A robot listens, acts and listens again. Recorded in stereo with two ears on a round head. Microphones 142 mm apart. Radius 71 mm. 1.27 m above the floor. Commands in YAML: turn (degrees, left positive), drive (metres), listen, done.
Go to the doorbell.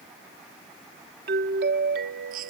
turn: -70
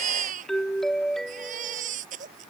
drive: 1.0
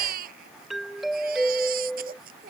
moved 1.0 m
drive: 1.0
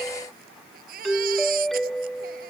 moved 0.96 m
drive: 1.0
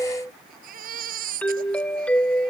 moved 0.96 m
turn: 10
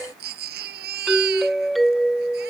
drive: 1.0
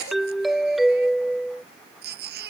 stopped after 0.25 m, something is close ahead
done: "Arrived at the doorbell, straight ahead."